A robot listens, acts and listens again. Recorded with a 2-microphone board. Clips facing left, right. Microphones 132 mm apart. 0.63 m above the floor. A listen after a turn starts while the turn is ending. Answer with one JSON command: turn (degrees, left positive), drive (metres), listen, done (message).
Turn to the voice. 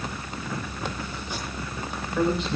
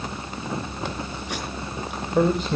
{"turn": -50}
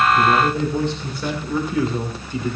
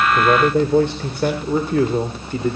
{"turn": -50}
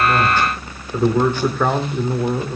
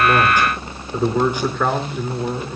{"turn": 15}
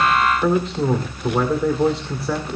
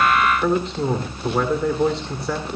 {"done": "Facing the man speaking, 2 to 4 m away."}